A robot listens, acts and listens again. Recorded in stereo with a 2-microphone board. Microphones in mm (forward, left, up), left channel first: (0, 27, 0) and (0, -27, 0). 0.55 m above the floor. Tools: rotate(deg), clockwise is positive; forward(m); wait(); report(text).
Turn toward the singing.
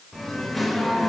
rotate(-30)
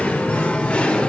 rotate(-160)
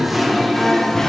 rotate(-10)
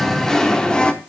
rotate(-20)
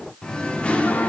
rotate(-25)
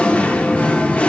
rotate(-20)
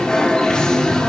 rotate(-10)
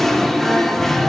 report("Found it: singing, straight ahead, 1 to 2 m away.")